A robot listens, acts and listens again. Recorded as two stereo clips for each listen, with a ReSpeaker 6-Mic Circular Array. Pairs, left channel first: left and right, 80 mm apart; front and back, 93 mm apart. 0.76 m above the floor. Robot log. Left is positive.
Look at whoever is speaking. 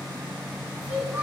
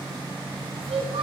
note: The child speaking: 165° right.
cmd yaw -165
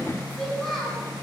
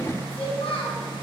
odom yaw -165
end: Found it: a child speaking, straight ahead.